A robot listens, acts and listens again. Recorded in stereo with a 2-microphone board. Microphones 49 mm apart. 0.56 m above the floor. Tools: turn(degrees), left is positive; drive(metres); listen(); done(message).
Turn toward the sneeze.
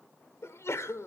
turn(degrees=60)
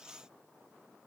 listen()
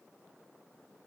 done("I heard a sneeze, but can't make it out now. It was about straight ahead or 60° left.")